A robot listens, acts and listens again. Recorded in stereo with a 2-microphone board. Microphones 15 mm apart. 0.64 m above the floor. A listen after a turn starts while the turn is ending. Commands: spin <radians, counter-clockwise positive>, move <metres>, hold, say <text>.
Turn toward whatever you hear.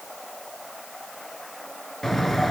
spin 0.44
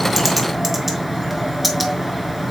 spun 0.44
say Facing the bird, 2 to 4 m away.